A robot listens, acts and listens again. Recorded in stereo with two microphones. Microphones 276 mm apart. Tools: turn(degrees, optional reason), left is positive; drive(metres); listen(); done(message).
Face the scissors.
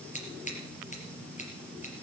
turn(degrees=25, reason="The scissors: about 25° left or 155° left.")
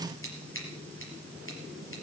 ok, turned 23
turn(degrees=130, reason="So it is at 130° left.")
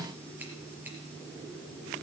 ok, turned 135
listen()
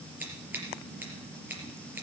done("Found it: scissors, straight ahead, over 4 m away.")